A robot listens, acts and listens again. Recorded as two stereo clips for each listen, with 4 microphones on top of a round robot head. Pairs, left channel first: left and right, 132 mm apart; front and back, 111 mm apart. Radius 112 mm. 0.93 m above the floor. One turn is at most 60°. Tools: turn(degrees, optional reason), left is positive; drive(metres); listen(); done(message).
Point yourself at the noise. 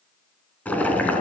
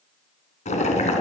turn(degrees=10, reason="The boiling: 10° left.")
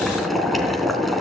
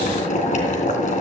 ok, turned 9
done("Found it: boiling, straight ahead.")